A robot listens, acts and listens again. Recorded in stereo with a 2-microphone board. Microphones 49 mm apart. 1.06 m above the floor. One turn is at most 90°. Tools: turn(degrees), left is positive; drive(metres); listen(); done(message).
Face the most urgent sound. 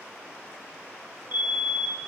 turn(degrees=-45)
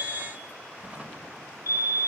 turn(degrees=-85)
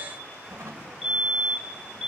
done("Facing the fire alarm, 2 to 4 m away.")